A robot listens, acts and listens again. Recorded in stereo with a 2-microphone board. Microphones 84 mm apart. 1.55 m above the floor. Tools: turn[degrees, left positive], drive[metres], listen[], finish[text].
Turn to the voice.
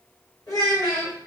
Thought: The child speaking: about 40° left or 140° left.
Action: turn[40]
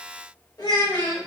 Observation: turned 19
Thought: So it is at 125° left.
Action: turn[125]
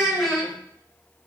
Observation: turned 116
Action: finish[Facing the child speaking.]